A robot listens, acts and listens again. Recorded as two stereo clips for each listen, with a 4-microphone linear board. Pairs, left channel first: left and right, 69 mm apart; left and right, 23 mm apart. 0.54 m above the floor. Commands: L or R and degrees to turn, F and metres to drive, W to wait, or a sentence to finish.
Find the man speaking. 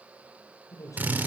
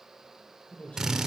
L55
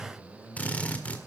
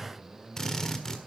L40
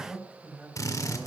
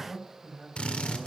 R10
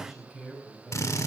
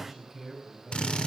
Found it: a man speaking, straight ahead, over 4 m away.